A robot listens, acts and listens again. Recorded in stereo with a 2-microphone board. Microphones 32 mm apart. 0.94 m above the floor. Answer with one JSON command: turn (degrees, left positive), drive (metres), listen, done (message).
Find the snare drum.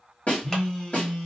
{"turn": 50}
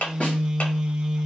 {"listen": true}
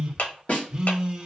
{"turn": 65}
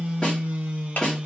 {"turn": 25}
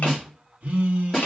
{"turn": 15}
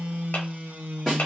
{"done": "Found it: a snare drum, straight ahead, 1 to 2 m away."}